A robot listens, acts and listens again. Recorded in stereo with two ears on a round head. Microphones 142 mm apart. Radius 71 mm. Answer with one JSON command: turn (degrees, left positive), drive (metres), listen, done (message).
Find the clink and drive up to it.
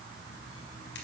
{"listen": true}
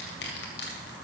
{"listen": true}
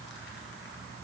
{"done": "I can't make out a clink to turn to."}